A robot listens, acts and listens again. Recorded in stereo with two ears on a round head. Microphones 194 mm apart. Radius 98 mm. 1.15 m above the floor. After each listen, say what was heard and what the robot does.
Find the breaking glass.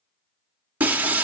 Turn 30° right.
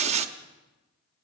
So it is at 140° right. Turn 140° right.
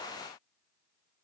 Facing where the breaking glass came from. I can't hear it now.